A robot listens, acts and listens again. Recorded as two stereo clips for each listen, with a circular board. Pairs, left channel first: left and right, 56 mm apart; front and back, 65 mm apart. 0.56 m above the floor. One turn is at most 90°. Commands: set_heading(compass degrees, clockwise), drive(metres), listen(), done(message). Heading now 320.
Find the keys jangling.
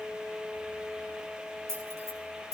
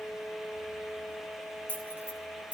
set_heading(50)
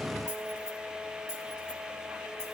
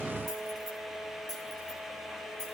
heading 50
set_heading(60)
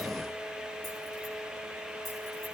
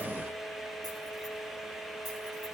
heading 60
listen()
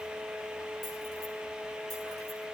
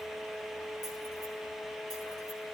listen()
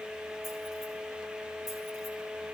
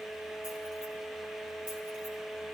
done("I heard keys jangling from this way, but can't make it out now.")